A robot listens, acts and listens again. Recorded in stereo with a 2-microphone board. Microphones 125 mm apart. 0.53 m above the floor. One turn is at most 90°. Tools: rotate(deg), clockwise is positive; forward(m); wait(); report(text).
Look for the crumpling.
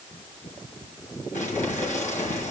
rotate(-90)
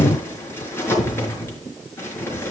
rotate(-20)
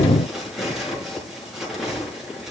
report("Found it: crumpling, straight ahead, over 4 m away.")